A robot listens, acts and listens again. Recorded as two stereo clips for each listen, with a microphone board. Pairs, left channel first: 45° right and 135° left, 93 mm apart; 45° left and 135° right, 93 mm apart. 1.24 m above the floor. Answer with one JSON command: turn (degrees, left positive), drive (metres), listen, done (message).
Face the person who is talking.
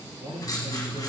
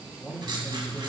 {"turn": 125}
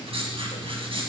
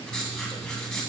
{"listen": true}
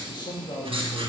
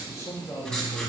{"turn": -10}
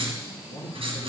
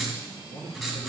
{"done": "Found it: a man speaking, straight ahead."}